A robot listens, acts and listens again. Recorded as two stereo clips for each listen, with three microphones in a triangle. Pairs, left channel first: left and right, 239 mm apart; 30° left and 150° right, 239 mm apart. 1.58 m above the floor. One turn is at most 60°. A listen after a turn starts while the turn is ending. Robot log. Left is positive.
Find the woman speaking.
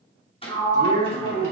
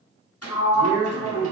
note: The woman speaking: 145° right.
cmd yaw -60
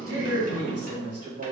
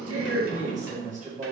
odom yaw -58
note: The woman speaking is now 90° right.
cmd yaw -60
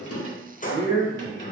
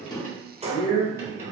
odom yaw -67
note: The woman speaking is now 25° right.
cmd yaw -25
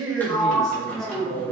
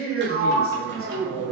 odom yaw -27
end: Facing the woman speaking, 1 to 2 m away.